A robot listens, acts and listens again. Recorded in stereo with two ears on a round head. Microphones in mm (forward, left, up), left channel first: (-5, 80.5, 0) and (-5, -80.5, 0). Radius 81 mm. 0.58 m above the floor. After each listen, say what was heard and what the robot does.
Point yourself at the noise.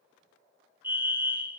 Turn 30° right.
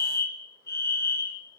So it is at 15° left. Turn 15° left.
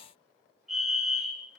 Facing the fire alarm.